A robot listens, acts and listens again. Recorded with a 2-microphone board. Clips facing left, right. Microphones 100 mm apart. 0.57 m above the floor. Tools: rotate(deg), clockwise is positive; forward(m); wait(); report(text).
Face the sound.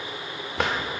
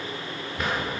rotate(-75)
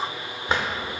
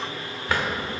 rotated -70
rotate(-25)
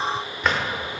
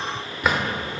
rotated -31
report("Facing the drawer, under 1 m away.")